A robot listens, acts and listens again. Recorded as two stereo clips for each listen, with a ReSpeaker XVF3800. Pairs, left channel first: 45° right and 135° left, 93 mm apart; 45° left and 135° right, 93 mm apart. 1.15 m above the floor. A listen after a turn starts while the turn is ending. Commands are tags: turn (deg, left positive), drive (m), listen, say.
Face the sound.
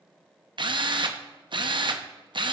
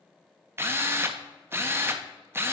<turn deg="160"/>
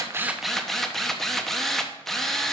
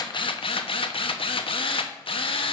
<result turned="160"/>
<turn deg="40"/>
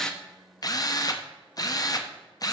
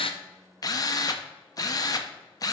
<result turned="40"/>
<say>Found it: a drill, straight ahead.</say>